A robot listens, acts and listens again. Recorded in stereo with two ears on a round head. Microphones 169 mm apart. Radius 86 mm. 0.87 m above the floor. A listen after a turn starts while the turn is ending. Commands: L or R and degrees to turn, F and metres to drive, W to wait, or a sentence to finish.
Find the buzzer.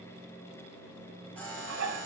L30
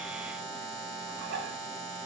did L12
Found it: a buzzer, straight ahead, over 4 m away.